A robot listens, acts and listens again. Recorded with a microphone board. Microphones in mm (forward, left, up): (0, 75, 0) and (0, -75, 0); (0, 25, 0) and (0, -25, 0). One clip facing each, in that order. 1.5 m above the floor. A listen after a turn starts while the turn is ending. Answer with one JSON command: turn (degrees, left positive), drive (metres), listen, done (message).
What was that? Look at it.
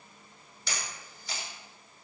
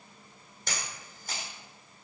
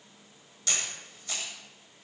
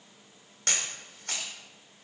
{"turn": -50}
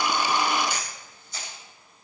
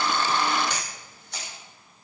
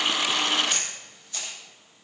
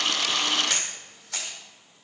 {"turn": -80}
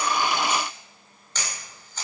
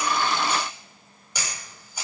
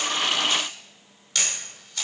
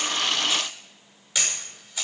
{"turn": -10}
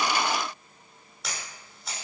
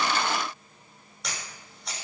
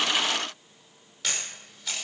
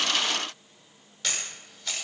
{"done": "Facing the camera shutter."}